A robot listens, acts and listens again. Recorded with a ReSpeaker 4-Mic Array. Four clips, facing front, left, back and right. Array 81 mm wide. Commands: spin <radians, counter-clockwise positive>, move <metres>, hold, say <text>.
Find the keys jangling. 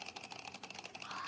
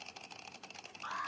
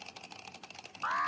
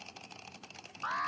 hold
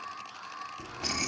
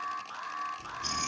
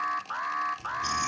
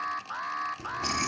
spin -0.87
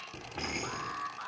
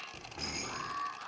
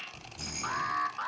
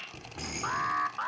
spin -0.17
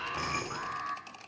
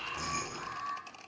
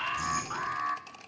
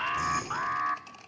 say Facing the keys jangling.